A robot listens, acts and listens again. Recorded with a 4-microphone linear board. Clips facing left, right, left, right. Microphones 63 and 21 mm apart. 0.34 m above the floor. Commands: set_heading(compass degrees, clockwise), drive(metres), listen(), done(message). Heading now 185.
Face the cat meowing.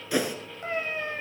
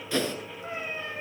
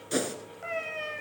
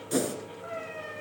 set_heading(125)
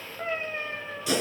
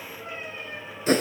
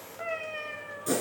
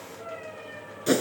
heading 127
set_heading(67)
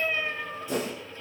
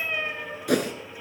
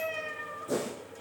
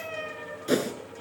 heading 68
done("Facing the cat meowing, 2 to 4 m away.")